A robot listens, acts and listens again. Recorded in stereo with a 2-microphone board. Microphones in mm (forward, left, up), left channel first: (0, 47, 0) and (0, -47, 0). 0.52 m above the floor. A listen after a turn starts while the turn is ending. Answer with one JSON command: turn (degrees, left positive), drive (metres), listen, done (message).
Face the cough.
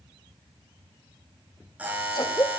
{"turn": 45}
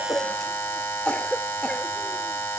{"turn": 10}
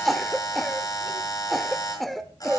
{"done": "Found it: a cough, straight ahead."}